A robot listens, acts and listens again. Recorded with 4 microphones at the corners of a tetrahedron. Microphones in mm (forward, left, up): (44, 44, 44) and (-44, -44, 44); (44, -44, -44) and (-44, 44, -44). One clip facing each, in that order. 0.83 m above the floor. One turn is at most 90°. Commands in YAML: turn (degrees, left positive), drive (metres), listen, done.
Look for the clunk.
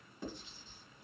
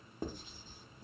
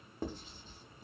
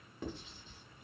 listen: true
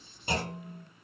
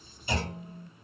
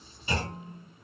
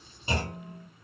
turn: 80
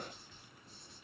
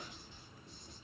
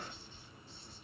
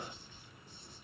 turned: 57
turn: 25
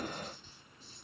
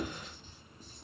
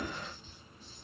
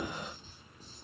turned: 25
done: "Facing where the clunk came from. I can't hear it now."